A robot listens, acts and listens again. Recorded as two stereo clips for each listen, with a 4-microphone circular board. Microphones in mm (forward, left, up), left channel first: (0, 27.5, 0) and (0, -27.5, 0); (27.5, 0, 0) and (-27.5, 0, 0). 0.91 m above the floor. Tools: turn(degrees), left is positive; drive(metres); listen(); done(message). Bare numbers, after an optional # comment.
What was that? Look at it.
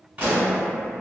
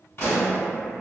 # The pop: 30° right.
turn(-30)
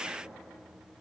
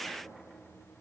done("Facing where the pop came from. I can't hear it now.")